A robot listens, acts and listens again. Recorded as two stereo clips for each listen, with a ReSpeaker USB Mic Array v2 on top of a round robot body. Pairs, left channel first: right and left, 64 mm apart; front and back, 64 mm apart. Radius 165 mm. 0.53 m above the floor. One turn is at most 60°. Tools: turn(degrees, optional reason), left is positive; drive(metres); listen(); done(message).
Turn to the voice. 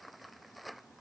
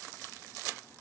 listen()
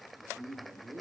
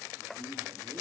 turn(degrees=60, reason="The man speaking: 145° left.")
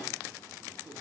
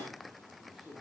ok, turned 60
turn(degrees=60, reason="The man speaking is now 95° left.")
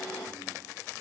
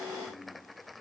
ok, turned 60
turn(degrees=35, reason="Nothing new. It was at 35° left.")
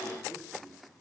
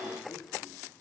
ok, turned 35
listen()
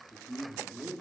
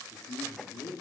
done("Found it: a man speaking, straight ahead, 1 to 2 m away.")